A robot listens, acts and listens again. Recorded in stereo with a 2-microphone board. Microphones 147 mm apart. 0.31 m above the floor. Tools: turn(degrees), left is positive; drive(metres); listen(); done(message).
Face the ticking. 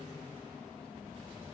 listen()
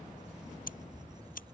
turn(degrees=70)
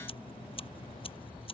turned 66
turn(degrees=40)
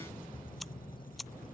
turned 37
done("Found it: ticking, straight ahead.")